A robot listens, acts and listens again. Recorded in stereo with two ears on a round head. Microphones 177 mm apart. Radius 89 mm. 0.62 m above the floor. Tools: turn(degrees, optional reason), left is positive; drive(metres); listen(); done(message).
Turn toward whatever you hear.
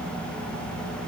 listen()
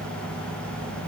listen()
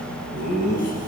turn(degrees=45, reason="The laughter: about 45° left or 135° left.")
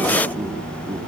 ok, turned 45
listen()
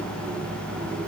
listen()
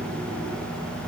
done("I heard laughter, but can't make it out now. It was about straight ahead or 90° left.")